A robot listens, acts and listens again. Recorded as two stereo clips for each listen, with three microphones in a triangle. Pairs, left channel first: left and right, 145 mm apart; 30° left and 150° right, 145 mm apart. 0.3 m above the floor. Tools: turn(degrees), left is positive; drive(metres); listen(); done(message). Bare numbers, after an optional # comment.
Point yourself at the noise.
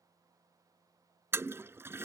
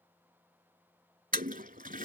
# The toilet flushing: 165° right.
turn(-165)
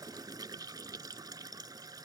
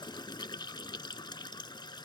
# The toilet flushing is now 30° right.
turn(-30)
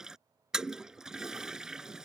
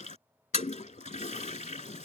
done("Facing the toilet flushing.")